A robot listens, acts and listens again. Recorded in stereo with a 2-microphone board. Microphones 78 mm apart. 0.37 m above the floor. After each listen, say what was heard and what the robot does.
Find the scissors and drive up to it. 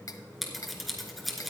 Turn 30° left.
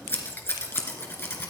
So it is at 150° left. Turn 150° left.
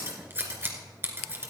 The scissors is now 30° right. Turn 30° right.
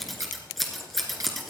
Drive 1.0 m forward.
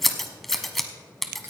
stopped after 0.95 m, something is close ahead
Arrived at the scissors, straight ahead.